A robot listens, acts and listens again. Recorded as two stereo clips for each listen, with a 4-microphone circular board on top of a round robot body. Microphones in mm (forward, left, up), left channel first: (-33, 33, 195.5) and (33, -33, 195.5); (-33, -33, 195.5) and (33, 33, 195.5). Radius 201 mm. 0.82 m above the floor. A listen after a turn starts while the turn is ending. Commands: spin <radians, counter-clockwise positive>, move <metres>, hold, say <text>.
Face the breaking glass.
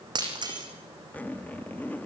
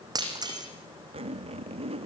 say Facing the breaking glass, over 4 m away.